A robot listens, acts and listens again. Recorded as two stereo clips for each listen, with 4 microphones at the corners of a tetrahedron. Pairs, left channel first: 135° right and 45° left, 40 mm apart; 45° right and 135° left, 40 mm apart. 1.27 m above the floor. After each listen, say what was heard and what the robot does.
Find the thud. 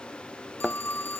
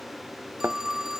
The thud: 130° left. Turn 130° left.
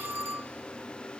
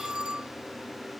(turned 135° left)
I heard a thud from this way, but can't make it out now.